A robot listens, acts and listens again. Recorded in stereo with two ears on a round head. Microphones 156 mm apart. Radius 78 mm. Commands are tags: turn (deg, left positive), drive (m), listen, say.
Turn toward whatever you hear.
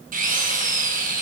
<turn deg="-50"/>
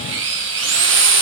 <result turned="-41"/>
<turn deg="-90"/>
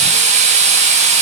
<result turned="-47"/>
<turn deg="-40"/>
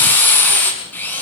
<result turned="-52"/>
<turn deg="10"/>
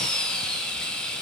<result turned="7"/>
<say>Facing the drill, over 4 m away.</say>